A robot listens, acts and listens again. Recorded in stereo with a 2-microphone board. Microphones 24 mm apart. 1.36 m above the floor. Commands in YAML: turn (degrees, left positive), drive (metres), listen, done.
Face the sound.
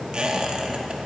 turn: -35
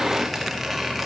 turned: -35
done: "Facing the squeak."